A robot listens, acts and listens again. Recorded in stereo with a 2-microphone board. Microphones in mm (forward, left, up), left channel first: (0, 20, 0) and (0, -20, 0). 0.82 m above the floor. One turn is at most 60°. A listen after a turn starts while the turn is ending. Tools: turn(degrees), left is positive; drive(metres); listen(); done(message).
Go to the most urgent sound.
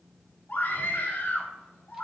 turn(degrees=55)
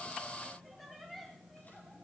listen()
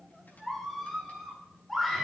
drive(metres=1.0)
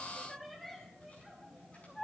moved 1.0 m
drive(metres=1.0)
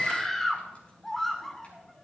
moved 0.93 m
turn(degrees=10)
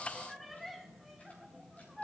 drive(metres=1.0)
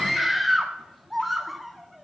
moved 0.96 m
drive(metres=1.0)
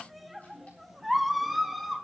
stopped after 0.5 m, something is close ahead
done("Arrived at the scream, straight ahead.")